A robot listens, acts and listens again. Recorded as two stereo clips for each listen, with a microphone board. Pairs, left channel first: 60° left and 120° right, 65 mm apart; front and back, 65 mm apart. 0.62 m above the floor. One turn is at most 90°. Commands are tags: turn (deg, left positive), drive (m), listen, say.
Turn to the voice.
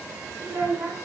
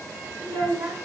<turn deg="-90"/>
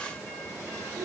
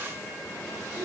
<turn deg="-90"/>
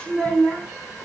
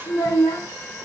<turn deg="-10"/>
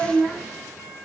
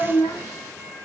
<say>Facing the child speaking, over 4 m away.</say>